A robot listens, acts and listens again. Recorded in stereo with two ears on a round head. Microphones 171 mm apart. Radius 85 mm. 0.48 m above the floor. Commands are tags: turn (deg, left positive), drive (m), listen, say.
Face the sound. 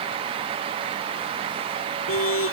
<turn deg="90"/>
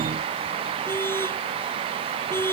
<turn deg="10"/>
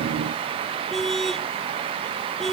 <say>Found it: a car horn, straight ahead.</say>